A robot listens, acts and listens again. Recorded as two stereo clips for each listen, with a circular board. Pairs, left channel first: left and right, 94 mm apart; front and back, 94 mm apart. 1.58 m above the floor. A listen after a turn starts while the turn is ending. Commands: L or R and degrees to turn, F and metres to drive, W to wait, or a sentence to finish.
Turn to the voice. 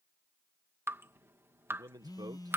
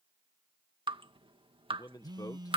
R45
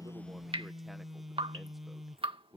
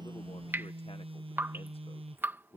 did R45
Found it: a man speaking, straight ahead.